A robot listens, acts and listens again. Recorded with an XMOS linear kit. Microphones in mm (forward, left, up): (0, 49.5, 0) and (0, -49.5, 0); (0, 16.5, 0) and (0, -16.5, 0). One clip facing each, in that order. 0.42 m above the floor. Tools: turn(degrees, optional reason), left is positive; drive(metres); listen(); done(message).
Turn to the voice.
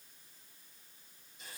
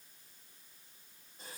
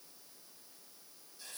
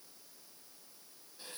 listen()
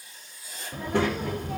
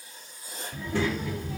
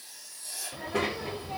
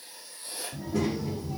turn(degrees=60, reason="The child speaking: about 60° left or 120° left.")
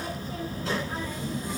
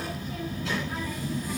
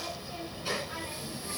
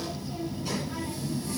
turn(degrees=40, reason="So it is at 40° left.")
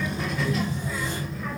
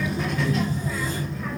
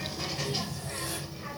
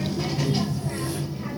done("Found it: a child speaking, straight ahead.")